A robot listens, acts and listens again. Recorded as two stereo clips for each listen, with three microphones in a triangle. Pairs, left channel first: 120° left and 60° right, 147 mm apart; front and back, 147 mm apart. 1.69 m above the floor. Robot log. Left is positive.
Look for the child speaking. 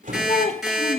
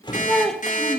note: The child speaking: 85° left.
cmd yaw +85
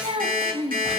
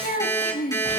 note: The child speaking is now 10° right.
cmd yaw -10
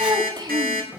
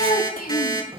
end: Found it: a child speaking, straight ahead, 2 to 4 m away.